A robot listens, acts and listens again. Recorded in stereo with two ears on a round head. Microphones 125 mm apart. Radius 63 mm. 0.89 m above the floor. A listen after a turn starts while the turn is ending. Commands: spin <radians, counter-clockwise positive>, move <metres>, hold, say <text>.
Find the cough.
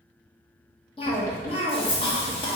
spin 0.70
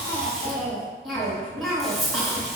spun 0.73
say Found it: a cough, straight ahead.